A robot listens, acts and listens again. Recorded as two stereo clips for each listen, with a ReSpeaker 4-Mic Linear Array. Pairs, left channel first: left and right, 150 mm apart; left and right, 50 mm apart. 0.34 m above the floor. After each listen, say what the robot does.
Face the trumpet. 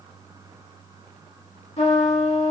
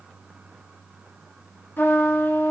Turn 50° left.
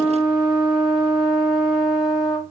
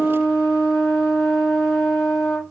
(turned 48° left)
Found it: a trumpet, straight ahead, 1 to 2 m away.